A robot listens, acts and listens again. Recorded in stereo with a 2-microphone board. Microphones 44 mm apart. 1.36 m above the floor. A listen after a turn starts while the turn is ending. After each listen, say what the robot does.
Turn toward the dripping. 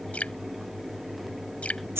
Turn 35° left.
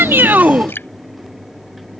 Turn 105° left.
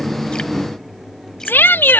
Keep listening.
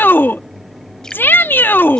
Keep listening.
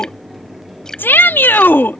Turn 15° left.
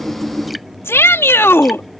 Keep listening.
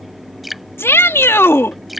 Facing the dripping.